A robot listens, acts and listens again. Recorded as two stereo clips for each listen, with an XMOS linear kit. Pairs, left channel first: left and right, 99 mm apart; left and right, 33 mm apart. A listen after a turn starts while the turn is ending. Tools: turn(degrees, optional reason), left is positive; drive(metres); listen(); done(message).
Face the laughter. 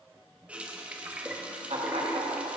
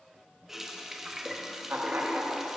turn(degrees=-90)
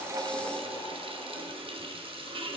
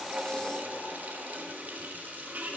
listen()
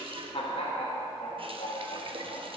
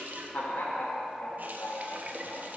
turn(degrees=75, reason="The laughter is now 75° left.")
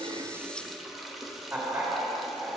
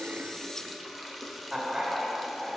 turn(degrees=-20, reason="The laughter is now 20° right.")
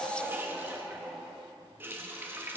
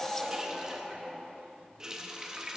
done("Facing the laughter, 2 to 4 m away.")